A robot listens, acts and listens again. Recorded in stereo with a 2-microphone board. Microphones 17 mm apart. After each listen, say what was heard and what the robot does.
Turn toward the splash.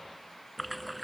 Turn 30° right.
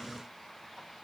Keep listening.
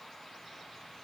I heard a splash, but can't make it out now. It was about 25° left or 145° right.